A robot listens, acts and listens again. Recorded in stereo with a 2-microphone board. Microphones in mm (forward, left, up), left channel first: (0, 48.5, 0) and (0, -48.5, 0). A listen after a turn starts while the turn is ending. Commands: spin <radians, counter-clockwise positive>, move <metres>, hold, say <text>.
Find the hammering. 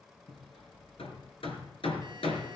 spin 1.57
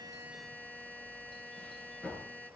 spin 0.17
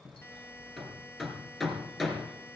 say Facing the hammering.